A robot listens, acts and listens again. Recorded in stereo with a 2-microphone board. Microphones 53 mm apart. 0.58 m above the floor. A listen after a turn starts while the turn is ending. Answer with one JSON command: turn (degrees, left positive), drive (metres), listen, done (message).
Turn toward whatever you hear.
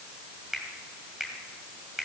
{"turn": -30}
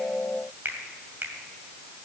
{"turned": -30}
{"turn": -140}
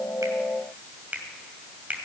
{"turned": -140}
{"turn": -30}
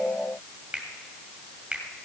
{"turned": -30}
{"turn": -20}
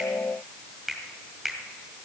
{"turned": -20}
{"done": "Facing the finger snap."}